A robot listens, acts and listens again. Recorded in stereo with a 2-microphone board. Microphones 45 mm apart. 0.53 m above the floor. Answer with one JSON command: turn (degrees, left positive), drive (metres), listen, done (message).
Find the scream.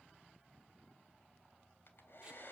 {"listen": true}
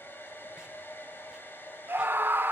{"turn": -55}
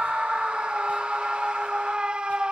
{"turn": -25}
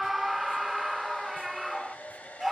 {"done": "Found it: a scream, straight ahead."}